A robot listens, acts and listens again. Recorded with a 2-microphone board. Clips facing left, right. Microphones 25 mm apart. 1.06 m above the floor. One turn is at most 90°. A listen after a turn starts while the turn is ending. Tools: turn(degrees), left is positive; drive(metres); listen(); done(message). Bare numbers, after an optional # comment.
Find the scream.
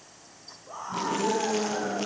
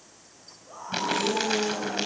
# The scream: about 20° left or 160° left.
turn(20)
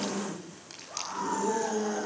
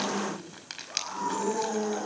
done("Found it: a scream, straight ahead.")